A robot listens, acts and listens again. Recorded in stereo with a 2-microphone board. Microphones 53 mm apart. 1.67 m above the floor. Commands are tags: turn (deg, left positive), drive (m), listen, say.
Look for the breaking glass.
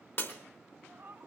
<turn deg="45"/>
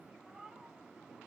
<listen/>
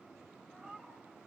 <say>I heard breaking glass, but can't make it out now. It was about straight ahead or 90° left.</say>